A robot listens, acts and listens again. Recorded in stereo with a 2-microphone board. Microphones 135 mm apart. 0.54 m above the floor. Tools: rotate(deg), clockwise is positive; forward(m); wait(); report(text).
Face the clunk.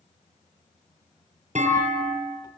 rotate(60)
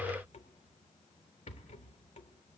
wait()
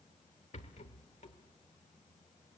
report("I heard a clunk, but can't make it out now. It was about straight ahead or 60° right.")